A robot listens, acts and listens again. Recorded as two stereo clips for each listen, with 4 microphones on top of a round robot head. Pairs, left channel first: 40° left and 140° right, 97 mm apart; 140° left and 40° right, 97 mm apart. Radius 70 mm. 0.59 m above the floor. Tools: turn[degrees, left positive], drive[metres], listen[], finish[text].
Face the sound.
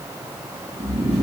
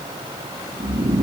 Thought: The snoring: 90° right.
Action: turn[-90]
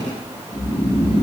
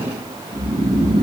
Action: finish[Facing the snoring, under 1 m away.]